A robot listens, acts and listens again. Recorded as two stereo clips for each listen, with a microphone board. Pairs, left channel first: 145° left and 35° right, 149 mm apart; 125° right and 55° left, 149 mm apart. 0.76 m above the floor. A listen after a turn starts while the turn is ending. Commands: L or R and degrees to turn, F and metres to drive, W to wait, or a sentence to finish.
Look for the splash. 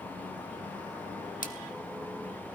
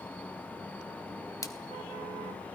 L170
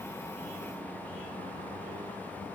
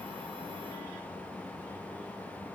I heard a splash from this way, but can't make it out now.